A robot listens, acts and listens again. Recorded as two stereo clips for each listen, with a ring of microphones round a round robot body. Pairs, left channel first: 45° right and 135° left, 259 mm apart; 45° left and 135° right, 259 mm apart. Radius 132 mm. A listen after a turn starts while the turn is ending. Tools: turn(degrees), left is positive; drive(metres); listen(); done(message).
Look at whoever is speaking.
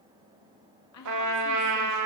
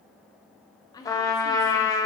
turn(degrees=-30)
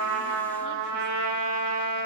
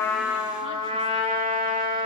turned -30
listen()
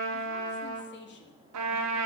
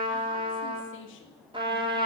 done("Facing the woman speaking, 1 to 2 m away.")